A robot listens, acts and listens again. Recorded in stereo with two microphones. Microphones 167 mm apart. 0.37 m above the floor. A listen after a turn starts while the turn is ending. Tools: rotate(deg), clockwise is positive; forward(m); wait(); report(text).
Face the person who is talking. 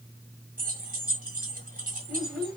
rotate(-30)
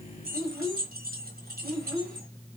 rotate(25)
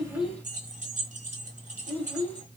rotate(-10)
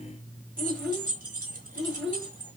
report("Facing the child speaking, 1 to 2 m away.")